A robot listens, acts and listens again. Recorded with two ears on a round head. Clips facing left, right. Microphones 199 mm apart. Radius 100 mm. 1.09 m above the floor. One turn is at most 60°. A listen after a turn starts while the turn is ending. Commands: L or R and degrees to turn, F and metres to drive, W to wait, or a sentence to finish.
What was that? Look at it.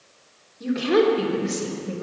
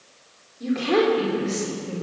L20
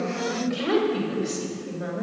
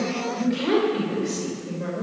L30
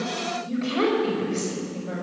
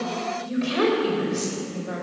R15
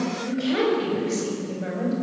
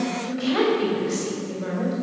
Found it: a woman speaking, straight ahead, over 4 m away.